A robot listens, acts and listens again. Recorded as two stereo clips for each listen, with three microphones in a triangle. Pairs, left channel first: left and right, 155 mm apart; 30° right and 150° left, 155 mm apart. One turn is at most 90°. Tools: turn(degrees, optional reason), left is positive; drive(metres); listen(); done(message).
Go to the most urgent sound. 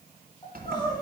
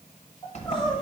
turn(degrees=25, reason="The crying: 25° left.")
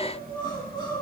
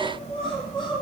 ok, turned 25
turn(degrees=30, reason="The crying is now 30° left.")
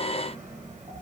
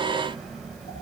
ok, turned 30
listen()
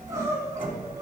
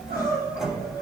turn(degrees=-20, reason="The crying is now 20° right.")
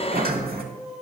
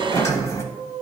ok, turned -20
drive(metres=1.0)
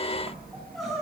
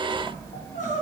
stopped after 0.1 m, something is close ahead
done("Blocked. The crying is further on, straight ahead.")